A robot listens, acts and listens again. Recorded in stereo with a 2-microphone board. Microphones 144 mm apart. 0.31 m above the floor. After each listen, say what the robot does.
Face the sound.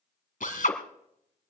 Turn 70° left.
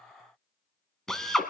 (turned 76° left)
Facing the drill, 1 to 2 m away.